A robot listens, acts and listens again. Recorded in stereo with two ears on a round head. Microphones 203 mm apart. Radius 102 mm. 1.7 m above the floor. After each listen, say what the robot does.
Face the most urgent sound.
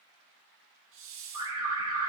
Turn 20° right.
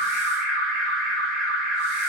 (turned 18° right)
Found it: an alarm, straight ahead, over 4 m away.